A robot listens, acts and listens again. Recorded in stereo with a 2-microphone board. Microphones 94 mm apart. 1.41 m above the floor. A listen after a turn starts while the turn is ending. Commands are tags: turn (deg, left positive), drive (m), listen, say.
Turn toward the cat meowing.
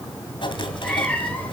<turn deg="20"/>
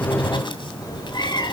<turn deg="130"/>
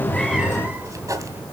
<turn deg="-20"/>
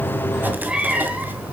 <turn deg="-15"/>
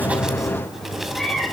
<say>Found it: a cat meowing, straight ahead.</say>